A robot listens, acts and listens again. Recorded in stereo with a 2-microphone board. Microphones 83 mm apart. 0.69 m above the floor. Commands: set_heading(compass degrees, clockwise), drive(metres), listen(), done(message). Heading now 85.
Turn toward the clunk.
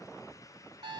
listen()
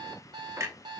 set_heading(120)
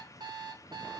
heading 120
listen()
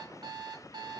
done("I heard a clunk, but can't make it out now. It was about straight ahead or 110° right.")